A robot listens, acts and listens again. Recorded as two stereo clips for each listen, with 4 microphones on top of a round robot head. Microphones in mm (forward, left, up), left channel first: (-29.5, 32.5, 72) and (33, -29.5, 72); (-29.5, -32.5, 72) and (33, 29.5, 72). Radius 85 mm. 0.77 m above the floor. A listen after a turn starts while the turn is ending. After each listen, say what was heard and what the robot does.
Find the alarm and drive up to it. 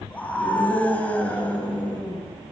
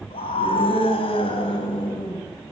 Keep listening.
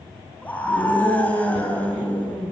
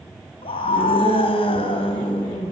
Keep listening.
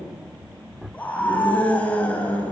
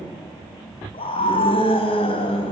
I can't make out an alarm, only a scream.